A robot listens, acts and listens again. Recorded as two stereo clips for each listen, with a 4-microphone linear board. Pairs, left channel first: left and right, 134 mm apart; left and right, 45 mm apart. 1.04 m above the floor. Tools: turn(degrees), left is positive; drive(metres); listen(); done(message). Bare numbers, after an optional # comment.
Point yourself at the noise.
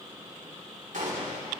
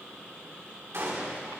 # The gunshot: about 70° right or 110° right.
turn(-70)
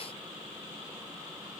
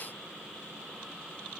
listen()
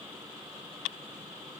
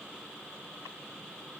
done("I heard a gunshot, but can't make it out now. It was about straight ahead or 40° right.")